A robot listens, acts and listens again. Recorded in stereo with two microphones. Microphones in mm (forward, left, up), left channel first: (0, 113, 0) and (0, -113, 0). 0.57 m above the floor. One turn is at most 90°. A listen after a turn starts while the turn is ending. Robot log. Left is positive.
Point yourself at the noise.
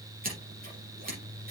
note: The scissors: about 40° right or 140° right.
cmd yaw -40
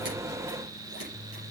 cmd idle
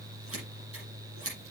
note: So it is at 100° right.
cmd yaw -90
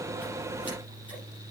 note: Nothing new. It was at 10° right.
cmd yaw -10
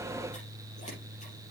cmd idle
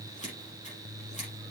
note: The scissors is now 30° left.
cmd yaw +30
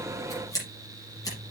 note: The scissors is now 15° left.
cmd yaw +15
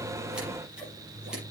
cmd idle
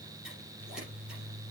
cmd idle
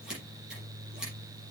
end: Found it: scissors, straight ahead.